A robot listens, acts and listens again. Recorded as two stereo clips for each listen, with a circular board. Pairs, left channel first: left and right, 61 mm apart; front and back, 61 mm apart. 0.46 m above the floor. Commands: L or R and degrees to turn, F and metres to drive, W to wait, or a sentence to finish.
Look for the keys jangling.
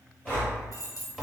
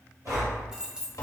L105
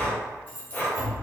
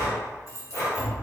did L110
L30
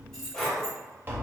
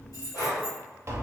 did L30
L15
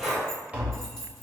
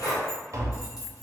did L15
L15
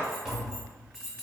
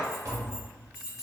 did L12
L10
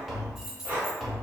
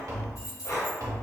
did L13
Found it: keys jangling, straight ahead, 2 to 4 m away.